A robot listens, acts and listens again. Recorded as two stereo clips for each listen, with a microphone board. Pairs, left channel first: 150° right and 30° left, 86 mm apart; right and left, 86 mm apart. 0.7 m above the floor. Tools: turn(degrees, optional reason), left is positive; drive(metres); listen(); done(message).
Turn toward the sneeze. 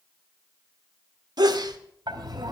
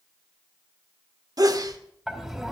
turn(degrees=55, reason="The sneeze: 55° left.")
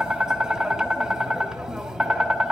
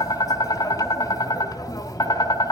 done("I heard a sneeze from this way, but can't make it out now.")